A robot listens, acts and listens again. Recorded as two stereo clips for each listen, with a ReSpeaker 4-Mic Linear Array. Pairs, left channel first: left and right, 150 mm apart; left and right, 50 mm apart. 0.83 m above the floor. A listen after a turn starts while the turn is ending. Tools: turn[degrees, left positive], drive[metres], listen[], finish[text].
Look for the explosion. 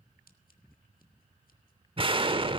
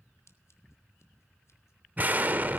Thought: The explosion: about 35° right or 145° right.
Action: turn[-35]
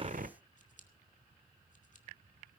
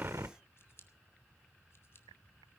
Thought: So it is at 110° right.
Action: turn[-110]
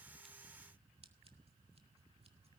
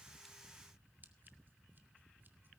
Action: finish[I heard an explosion from this way, but can't make it out now.]